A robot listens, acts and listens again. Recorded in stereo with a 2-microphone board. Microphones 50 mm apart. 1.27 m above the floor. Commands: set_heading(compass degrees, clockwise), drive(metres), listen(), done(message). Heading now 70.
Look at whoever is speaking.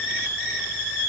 listen()
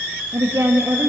set_heading(160)
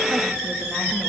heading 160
listen()
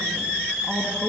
done("Facing the woman speaking, 2 to 4 m away.")